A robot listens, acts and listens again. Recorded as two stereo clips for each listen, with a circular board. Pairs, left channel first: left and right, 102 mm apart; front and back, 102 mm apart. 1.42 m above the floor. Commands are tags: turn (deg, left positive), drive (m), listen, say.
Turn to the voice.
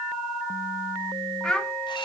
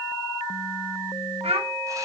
<turn deg="170"/>
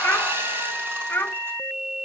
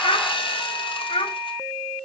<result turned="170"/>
<turn deg="20"/>
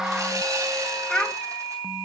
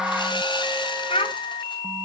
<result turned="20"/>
<turn deg="10"/>
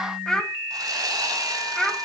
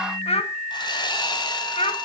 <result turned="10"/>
<say>Facing the child speaking.</say>